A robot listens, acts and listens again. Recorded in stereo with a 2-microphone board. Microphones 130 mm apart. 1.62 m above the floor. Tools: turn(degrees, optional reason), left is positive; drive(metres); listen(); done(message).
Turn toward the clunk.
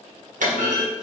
turn(degrees=-75, reason="The clunk: about 75° right or 105° right.")
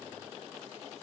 listen()
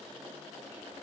done("I heard a clunk, but can't make it out now. It was about straight ahead or 30° right.")